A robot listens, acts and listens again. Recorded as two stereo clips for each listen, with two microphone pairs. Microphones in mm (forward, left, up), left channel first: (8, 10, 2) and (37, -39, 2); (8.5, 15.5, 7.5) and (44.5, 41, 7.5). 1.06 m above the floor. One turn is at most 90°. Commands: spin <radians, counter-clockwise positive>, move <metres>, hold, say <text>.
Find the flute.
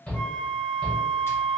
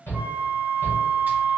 spin 0.87
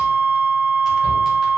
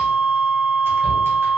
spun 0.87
spin -0.17
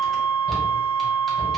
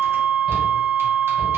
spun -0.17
say Facing the flute.